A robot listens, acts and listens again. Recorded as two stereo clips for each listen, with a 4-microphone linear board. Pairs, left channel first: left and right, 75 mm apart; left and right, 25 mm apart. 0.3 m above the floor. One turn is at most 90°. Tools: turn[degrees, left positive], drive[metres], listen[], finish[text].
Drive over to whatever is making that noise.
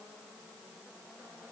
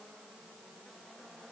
Action: listen[]
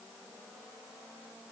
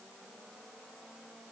Action: listen[]
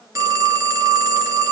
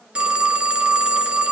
Thought: The phone ringing: about 50° right or 130° right.
Action: turn[-50]
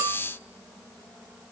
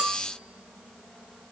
Thought: So it is at 80° right.
Action: turn[-80]
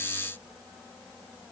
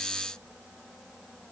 Action: listen[]
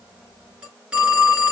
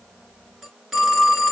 Thought: The phone ringing is now 15° right.
Action: turn[-15]
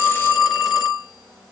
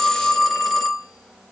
Action: drive[1.0]
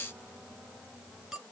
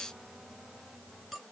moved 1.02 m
Action: listen[]
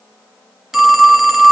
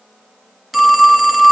Action: drive[1.0]
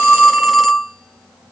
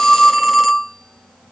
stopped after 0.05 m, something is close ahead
Action: finish[Arrived at the phone ringing, straight ahead.]